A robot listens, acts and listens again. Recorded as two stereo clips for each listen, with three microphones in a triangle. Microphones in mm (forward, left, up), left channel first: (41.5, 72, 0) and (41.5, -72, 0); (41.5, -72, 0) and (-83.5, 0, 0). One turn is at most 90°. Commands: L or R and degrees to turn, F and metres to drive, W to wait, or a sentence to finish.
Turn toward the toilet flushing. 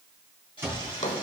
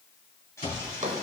L40
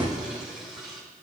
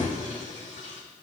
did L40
Facing the toilet flushing, 2 to 4 m away.